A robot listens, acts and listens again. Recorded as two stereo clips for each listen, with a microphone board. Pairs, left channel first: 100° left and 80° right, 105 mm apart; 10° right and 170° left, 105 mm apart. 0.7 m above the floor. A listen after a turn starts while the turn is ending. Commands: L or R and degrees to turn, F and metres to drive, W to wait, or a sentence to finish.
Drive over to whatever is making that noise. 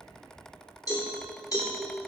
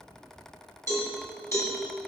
L50
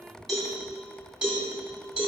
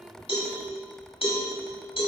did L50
F1.0
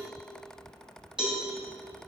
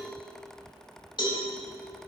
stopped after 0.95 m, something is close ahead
Arrived at the cowbell, straight ahead.